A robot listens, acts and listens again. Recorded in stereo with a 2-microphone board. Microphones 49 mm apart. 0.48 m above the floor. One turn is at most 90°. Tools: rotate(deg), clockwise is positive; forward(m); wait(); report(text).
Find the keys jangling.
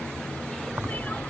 rotate(45)
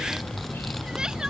report("Found it: keys jangling, straight ahead.")